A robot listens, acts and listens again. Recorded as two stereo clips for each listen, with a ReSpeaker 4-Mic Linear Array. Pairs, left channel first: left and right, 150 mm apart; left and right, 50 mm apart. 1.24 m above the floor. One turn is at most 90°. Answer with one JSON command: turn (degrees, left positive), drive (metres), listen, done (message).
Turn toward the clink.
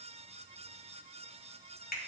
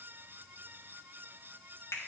{"listen": true}
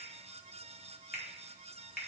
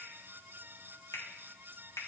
{"listen": true}
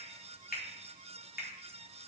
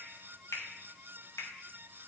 {"done": "I can't make out a clink to turn to."}